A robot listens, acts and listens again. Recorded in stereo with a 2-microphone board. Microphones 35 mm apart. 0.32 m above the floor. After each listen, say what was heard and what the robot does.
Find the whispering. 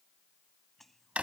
Turn 30° left.
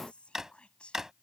So it is at 140° left. Turn 140° left.
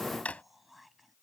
Facing the whispering.